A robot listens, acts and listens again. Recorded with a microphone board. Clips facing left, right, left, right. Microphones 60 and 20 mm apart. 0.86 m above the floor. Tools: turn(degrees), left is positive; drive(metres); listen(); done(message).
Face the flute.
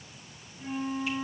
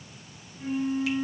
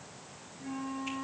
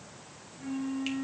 turn(degrees=-25)
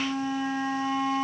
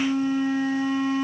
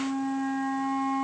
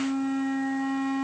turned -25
turn(degrees=-130)
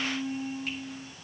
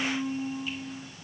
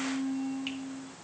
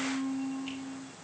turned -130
turn(degrees=-20)
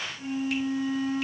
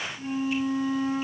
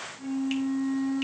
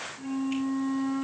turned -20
done("Facing the flute, 2 to 4 m away.")